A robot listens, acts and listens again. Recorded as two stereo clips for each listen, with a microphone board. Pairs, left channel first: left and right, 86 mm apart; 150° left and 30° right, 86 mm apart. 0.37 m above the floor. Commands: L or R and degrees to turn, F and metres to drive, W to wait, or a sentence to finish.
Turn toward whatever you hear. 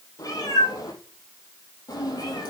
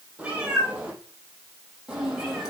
L50
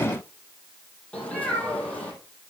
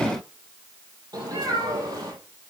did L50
L15
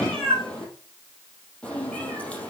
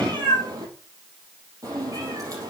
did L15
L15
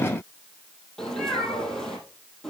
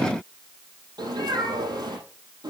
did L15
Facing the cat meowing.